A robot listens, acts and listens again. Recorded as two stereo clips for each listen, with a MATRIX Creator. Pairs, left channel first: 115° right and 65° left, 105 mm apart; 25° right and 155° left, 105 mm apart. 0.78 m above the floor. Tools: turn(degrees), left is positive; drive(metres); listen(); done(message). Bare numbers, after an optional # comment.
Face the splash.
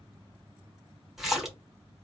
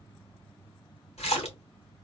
# The splash: 20° right.
turn(-20)
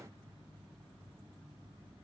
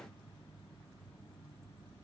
done("Facing where the splash came from. I can't hear it now.")